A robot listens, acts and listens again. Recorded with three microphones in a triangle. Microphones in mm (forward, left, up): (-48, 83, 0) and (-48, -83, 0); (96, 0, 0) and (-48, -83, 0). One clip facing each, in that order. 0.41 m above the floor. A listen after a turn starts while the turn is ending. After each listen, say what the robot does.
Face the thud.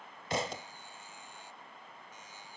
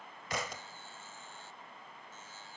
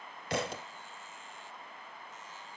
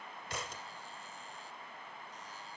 Turn 30° left.
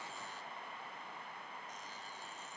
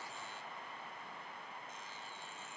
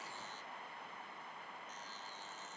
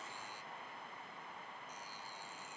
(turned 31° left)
Facing where the thud came from. I can't hear it now.